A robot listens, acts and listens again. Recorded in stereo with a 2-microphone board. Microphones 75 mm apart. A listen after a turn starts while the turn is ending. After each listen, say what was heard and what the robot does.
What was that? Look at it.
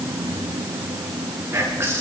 The whispering: about 35° right or 145° right. Turn 35° right.
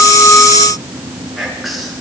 Found it: whispering, straight ahead, over 4 m away.